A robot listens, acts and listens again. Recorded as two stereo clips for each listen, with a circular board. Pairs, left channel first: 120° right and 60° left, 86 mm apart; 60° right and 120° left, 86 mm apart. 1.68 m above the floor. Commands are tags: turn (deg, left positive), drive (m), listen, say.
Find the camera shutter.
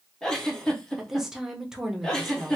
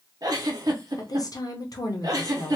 <listen/>
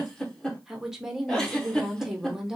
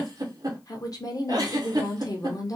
<listen/>
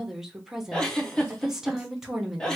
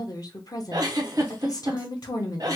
<say>I can't make out a camera shutter to turn to.</say>